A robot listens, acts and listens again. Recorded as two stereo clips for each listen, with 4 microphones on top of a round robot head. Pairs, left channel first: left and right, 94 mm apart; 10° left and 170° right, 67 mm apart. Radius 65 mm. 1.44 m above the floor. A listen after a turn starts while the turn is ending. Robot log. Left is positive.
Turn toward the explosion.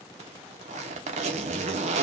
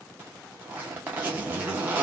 cmd idle
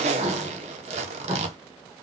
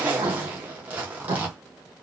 note: The explosion: 130° right.
cmd yaw -130
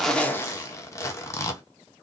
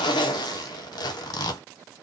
end: I heard an explosion from this way, but can't make it out now.